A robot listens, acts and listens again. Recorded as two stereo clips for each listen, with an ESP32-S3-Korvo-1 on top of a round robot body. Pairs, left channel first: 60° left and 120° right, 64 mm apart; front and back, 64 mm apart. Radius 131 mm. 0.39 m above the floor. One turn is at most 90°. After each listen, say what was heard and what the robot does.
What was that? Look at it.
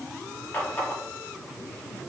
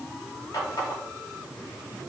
Found it: a running tap, straight ahead, 1 to 2 m away.